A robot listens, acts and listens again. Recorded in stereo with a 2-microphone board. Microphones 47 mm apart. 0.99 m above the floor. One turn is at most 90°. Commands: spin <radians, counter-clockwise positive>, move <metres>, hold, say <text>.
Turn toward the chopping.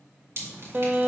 hold
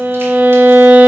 hold
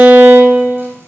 say I can't make out chopping, only dripping and a violin.